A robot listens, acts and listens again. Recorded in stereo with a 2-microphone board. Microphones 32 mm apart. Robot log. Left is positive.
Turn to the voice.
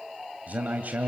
note: The man speaking: about 60° right or 120° right.
cmd yaw -60
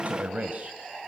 note: So it is at 55° right.
cmd yaw -55
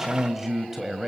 note: The man speaking is now 10° right.
cmd yaw -10
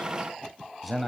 end: Facing the man speaking, 2 to 4 m away.